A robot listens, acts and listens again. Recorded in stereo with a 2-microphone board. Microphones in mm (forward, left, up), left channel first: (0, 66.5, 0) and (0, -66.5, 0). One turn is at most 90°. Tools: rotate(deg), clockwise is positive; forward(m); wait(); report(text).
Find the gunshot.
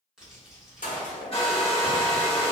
rotate(-90)
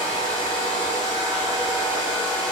report("Facing where the gunshot came from. I can't hear it now.")